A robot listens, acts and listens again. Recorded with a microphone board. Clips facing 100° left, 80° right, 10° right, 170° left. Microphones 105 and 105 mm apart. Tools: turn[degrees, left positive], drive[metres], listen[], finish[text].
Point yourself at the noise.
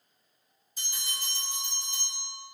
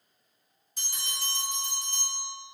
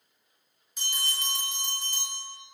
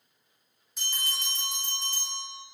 Thought: The bell: 100° right.
Action: turn[-100]
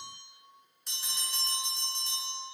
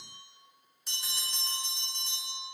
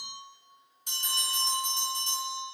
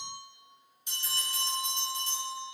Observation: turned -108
Action: finish[Found it: a bell, straight ahead, 1 to 2 m away.]